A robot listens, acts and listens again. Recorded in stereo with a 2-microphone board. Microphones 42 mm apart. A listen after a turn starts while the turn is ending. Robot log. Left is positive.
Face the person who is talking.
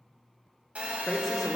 cmd yaw +30
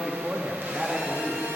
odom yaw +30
note: So it is at 20° right.
cmd yaw -20
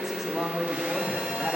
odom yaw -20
end: Found it: a woman speaking, straight ahead, under 1 m away.